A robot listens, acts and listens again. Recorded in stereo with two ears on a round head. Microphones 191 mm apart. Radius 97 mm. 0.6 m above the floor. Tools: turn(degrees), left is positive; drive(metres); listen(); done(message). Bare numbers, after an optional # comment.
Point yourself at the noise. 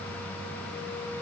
listen()
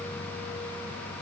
listen()
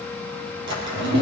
# The drawer: about 60° right or 120° right.
turn(-60)
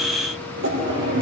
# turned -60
# So it is at 60° right.
turn(-60)
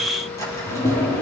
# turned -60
# The drawer is now 15° left.
turn(15)
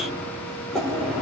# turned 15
done("Found it: a drawer, straight ahead, 2 to 4 m away.")